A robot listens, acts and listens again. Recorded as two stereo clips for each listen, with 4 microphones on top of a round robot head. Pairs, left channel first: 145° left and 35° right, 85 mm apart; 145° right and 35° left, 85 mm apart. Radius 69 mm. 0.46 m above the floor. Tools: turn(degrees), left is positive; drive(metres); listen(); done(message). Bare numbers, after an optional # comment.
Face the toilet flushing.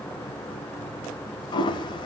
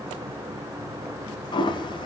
# The toilet flushing: straight behind.
turn(180)
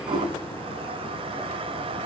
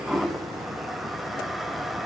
# The toilet flushing is now 55° right.
turn(-55)
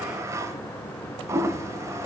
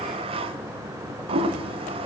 # The toilet flushing is now 20° left.
turn(20)
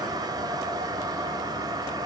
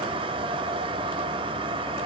# The toilet flushing is now 10° left.
turn(10)
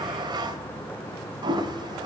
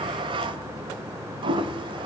done("Found it: a toilet flushing, straight ahead.")